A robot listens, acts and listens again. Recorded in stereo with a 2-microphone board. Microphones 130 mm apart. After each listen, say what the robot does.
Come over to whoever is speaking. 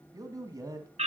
Turn 30° right.
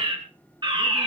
Keep listening.
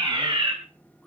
Keep listening.
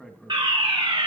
Drive 1.0 m forward.
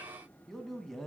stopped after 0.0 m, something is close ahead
Something is in my way. I am facing the man speaking but have not reached it.